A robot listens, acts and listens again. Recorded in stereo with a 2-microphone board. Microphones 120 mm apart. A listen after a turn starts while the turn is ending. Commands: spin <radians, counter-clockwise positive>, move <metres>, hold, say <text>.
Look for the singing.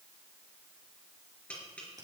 hold
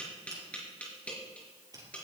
hold
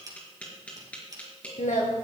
spin 1.57
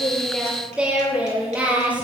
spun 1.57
spin -0.17
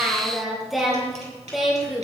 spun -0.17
say Facing the singing.